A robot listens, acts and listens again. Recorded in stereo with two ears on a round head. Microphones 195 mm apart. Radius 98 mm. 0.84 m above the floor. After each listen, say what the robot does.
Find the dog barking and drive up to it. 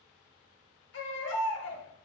Keep listening.
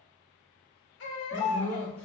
Turn 30° left.
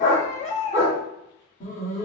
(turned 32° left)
Turn 140° left.
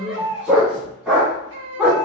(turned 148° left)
Drive 1.0 m forward.
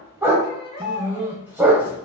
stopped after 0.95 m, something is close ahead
Turn 10° right.
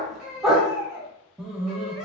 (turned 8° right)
I am next to the dog barking.